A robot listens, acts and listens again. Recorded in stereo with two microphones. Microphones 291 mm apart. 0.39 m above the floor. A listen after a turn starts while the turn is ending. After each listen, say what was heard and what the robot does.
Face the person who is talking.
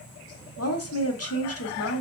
The woman speaking: about 55° left or 125° left. Turn 55° left.
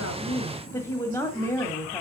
So it is at 10° left. Turn 10° left.
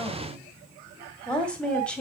Facing the woman speaking.